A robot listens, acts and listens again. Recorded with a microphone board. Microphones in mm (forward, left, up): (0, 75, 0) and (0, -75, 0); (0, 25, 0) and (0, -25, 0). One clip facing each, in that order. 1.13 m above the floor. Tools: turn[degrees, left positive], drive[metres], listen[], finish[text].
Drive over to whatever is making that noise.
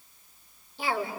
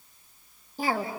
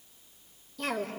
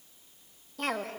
Thought: The cough: about 45° right or 135° right.
Action: turn[-45]
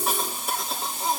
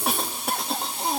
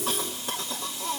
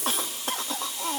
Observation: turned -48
Thought: So it is at 85° right.
Action: turn[-85]
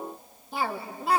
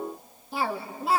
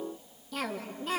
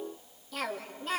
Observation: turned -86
Action: drive[1.0]
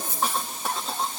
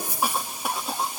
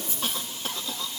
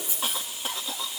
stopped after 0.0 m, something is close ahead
Thought: The cough is now 10° right.
Action: turn[-10]
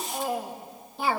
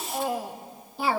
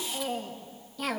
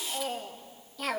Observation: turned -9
Action: finish[Blocked. The cough is further on, straight ahead.]